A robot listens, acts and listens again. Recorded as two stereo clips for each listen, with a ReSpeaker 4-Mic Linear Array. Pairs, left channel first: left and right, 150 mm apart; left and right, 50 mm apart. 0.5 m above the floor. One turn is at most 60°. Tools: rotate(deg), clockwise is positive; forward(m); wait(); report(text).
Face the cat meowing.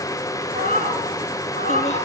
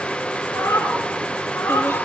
rotate(-60)
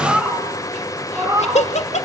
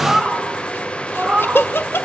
rotate(20)
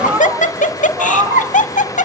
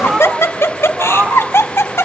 rotate(30)
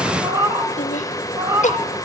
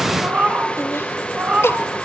rotate(20)
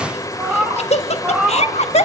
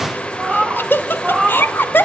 report("Facing the cat meowing, 2 to 4 m away.")